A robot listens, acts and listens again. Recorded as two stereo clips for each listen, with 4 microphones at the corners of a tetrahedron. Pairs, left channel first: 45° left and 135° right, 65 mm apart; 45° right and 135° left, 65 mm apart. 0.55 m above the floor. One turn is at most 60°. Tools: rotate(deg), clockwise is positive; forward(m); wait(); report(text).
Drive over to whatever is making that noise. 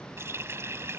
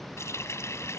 rotate(60)
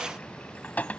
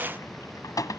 rotate(20)
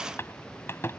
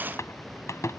forward(1.0)
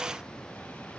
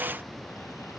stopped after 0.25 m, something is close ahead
wait()
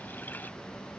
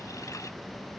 wait()
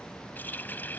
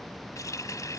rotate(15)
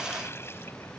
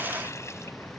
wait()
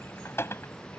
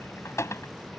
report("Something is in my way. I am facing the running tap but have not reached it.")